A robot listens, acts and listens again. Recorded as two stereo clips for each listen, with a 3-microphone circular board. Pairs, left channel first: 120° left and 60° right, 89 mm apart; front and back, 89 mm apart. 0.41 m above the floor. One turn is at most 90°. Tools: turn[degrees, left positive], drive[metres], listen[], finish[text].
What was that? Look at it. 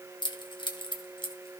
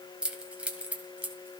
Thought: The keys jangling: 105° left.
Action: turn[90]
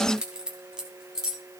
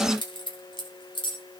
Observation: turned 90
Thought: The keys jangling is now 25° left.
Action: turn[25]
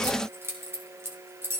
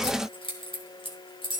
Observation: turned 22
Action: finish[Found it: keys jangling, straight ahead, 2 to 4 m away.]